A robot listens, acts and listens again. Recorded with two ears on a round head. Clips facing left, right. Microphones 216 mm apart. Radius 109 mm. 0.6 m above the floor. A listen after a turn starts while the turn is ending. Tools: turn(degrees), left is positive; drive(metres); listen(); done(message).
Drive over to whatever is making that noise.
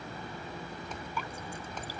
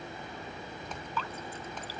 turn(degrees=30)
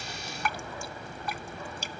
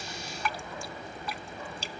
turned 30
turn(degrees=135)
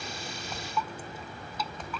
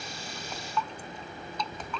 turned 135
drive(metres=1.0)
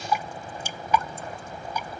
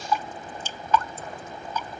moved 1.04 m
turn(degrees=10)
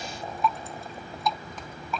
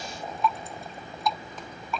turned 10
drive(metres=1.0)
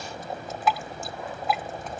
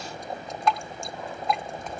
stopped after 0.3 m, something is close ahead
done("I am next to the dripping.")